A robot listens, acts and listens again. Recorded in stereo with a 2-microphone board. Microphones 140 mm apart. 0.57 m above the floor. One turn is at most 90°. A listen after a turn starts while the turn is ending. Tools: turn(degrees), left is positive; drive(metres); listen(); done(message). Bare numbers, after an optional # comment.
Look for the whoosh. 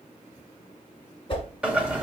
# The whoosh: about 40° left or 140° left.
turn(40)
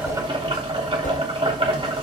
# So it is at 100° left.
turn(90)
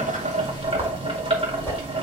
# Nothing new. It was at 10° left.
turn(10)
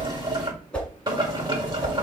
# The whoosh is now 10° left.
turn(10)
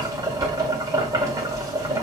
listen()
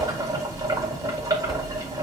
listen()
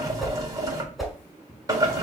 done("Found it: a whoosh, straight ahead.")